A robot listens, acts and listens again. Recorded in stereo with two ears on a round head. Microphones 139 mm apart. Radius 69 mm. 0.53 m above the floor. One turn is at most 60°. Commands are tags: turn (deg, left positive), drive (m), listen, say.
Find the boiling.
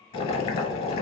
<turn deg="35"/>
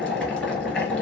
<say>Found it: boiling, straight ahead.</say>